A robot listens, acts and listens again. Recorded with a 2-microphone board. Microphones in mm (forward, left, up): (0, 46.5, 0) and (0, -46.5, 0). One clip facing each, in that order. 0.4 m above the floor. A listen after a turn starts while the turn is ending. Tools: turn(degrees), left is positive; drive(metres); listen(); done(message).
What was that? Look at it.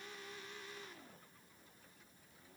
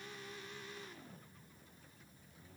listen()
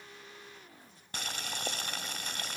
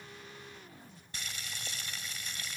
turn(degrees=60)
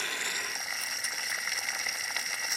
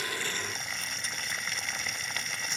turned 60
done("Facing the boiling.")